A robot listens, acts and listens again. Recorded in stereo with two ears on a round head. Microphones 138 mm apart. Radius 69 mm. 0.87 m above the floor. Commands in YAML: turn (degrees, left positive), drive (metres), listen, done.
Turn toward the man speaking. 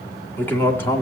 turn: 15
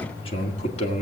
turn: 135
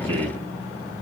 listen: true
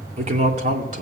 turn: -50
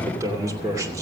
turn: -20
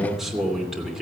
done: "Facing the man speaking."